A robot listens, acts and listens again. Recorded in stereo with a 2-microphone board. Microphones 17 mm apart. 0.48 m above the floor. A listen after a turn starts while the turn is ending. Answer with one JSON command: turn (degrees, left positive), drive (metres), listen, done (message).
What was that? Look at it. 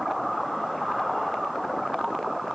{"listen": true}
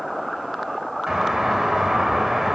{"turn": -40}
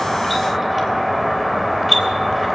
{"turn": -10}
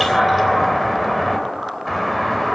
{"done": "Found it: a doorbell, straight ahead."}